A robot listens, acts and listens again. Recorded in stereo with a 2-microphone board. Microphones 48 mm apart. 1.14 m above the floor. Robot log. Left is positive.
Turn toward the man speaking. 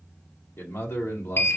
note: The man speaking: about 75° left or 105° left.
cmd yaw +75
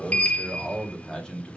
note: So it is at 20° left.
cmd yaw +20
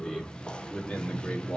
note: The man speaking is now 25° left.
cmd yaw +25
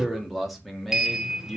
end: Facing the man speaking.